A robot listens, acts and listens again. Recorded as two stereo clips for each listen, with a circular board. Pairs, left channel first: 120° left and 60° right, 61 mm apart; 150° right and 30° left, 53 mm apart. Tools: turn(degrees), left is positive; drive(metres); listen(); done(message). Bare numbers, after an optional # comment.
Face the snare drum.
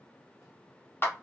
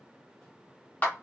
listen()
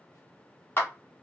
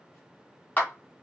listen()
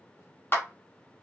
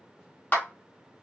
done("I can't make out a snare drum, only a clap.")